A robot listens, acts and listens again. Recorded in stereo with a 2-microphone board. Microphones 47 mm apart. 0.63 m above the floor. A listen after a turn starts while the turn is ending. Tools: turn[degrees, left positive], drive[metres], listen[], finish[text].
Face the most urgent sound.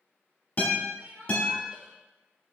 Thought: The crying: about 25° right or 155° right.
Action: turn[-25]
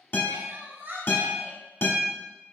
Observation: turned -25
Thought: So it is at 130° right.
Action: turn[-130]
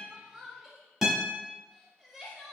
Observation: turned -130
Thought: The crying is now 10° right.
Action: turn[-10]
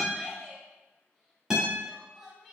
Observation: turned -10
Action: finish[Facing the crying, under 1 m away.]